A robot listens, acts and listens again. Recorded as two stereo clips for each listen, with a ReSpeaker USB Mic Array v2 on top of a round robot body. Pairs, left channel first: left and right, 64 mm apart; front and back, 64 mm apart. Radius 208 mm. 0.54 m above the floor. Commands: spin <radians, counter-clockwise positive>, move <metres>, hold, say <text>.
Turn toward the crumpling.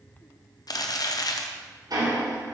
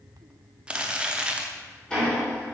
spin 1.92
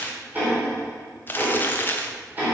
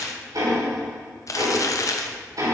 spin 0.52
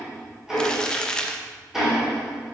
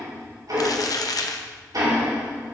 spin 0.17
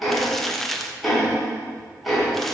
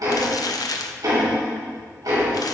say Facing the crumpling, under 1 m away.